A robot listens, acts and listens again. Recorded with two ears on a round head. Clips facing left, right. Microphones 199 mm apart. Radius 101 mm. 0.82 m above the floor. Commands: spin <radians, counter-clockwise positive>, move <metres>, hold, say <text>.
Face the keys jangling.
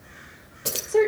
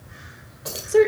spin 0.70
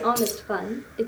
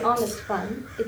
hold
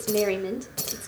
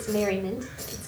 spin 1.57
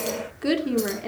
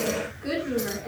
hold
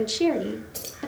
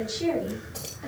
spin 0.35
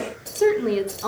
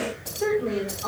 say Found it: keys jangling, straight ahead.